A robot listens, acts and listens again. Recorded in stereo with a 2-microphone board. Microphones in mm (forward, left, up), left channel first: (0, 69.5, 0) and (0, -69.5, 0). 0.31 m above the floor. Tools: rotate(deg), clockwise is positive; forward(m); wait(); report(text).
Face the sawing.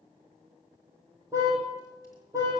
wait()
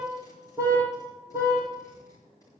wait()
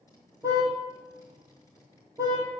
report("I can't make out sawing to turn to.")